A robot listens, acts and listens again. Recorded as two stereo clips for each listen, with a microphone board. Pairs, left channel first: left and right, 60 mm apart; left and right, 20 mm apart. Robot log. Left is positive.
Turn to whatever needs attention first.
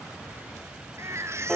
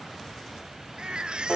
note: The baby crying: about 50° right or 130° right.
cmd yaw -50
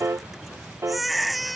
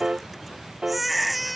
end: Facing the baby crying.